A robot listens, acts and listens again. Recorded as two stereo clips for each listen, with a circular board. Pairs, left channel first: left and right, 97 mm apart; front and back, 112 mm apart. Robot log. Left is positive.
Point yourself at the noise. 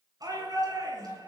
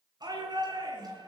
note: The shout: 135° right.
cmd yaw -135
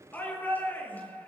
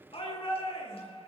note: The shout is now 20° left.
cmd yaw +20
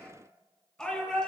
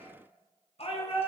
note: The shout is now 10° left.
cmd yaw +10
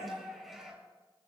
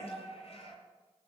end: Found it: a shout, straight ahead, over 4 m away.